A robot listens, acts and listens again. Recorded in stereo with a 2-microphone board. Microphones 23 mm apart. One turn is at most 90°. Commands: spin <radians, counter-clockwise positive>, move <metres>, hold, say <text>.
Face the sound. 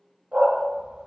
spin -0.87
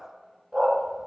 say Found it: a dog barking, straight ahead.